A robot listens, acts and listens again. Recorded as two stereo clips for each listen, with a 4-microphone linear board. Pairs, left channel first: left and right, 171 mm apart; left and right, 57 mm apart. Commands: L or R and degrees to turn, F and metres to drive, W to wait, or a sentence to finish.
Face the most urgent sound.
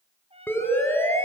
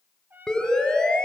L30
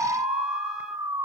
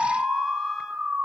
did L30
R20
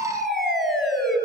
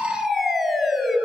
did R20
Found it: a siren, straight ahead.